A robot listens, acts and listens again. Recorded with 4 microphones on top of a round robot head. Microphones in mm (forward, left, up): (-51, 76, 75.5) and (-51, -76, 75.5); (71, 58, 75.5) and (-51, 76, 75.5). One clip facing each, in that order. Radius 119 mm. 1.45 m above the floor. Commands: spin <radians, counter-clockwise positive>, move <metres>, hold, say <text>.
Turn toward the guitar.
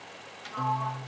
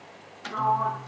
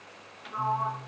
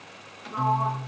spin 2.97
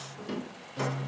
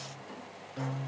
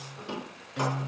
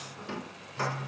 say Found it: a guitar, straight ahead.